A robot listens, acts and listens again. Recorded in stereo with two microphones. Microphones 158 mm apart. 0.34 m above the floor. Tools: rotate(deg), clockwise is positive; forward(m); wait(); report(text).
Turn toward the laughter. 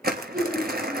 rotate(30)
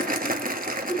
rotate(-10)
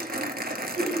report("Found it: laughter, straight ahead, over 4 m away.")